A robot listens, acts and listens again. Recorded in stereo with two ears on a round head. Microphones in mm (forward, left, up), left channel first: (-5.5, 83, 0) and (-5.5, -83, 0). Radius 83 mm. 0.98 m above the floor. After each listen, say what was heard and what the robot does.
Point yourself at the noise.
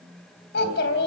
The child speaking: about 65° left or 115° left. Turn 65° left.
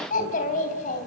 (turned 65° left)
So it is at 45° left. Turn 45° left.
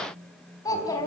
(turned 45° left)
The child speaking is now 20° left. Turn 20° left.
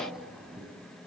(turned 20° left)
Found it: a child speaking, straight ahead, over 4 m away.